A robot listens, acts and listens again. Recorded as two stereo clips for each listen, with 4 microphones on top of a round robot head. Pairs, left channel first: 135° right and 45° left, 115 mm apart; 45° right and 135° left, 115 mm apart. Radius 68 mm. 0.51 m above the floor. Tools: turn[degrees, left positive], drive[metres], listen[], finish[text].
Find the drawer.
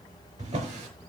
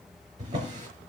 Thought: The drawer: 75° left.
Action: turn[75]
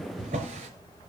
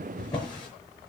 Thought: The drawer is now 10° left.
Action: turn[10]
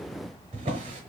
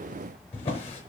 Action: finish[Found it: a drawer, straight ahead.]